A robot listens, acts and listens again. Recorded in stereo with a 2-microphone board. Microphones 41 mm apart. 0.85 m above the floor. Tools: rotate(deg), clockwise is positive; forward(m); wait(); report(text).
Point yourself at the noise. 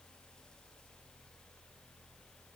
wait()
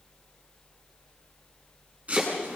rotate(35)
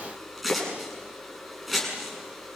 report("Found it: chopping, straight ahead.")